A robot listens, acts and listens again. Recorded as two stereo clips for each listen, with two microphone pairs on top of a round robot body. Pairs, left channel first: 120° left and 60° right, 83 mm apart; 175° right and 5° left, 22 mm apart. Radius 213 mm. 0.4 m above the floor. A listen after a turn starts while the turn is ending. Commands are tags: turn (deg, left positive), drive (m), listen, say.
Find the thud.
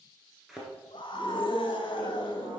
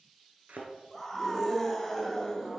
<turn deg="25"/>
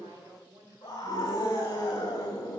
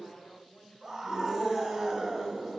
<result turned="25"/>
<say>I heard a thud from this way, but can't make it out now.</say>